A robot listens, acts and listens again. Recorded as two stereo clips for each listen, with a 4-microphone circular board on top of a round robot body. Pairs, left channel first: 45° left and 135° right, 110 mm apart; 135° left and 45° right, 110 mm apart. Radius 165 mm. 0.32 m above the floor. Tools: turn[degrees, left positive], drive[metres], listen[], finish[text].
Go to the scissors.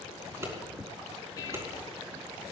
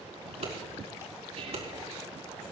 Thought: The scissors: 70° right.
Action: turn[-70]
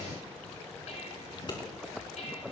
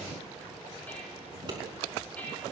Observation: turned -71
Action: drive[1.0]
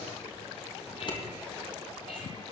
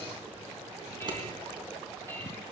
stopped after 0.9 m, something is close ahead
Action: finish[Blocked. The scissors is further on, straight ahead.]